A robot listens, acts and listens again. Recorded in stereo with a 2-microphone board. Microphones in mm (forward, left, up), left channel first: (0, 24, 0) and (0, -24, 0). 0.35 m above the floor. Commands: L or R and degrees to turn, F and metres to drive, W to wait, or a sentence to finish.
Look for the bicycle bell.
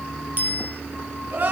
R35
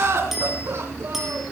W
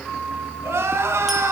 W
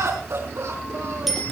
I heard a bicycle bell, but can't make it out now. It was about straight ahead or 110° right.